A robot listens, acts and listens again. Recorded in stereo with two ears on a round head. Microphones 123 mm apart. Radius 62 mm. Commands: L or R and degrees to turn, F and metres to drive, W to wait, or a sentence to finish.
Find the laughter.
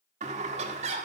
R50
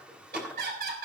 R75
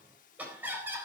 R15
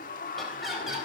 Facing the laughter.